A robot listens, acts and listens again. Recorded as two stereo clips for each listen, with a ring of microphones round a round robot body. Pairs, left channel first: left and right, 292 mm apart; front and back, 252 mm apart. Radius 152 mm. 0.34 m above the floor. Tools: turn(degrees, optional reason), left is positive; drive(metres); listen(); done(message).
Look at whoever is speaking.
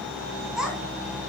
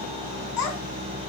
done("Found it: a child speaking, straight ahead.")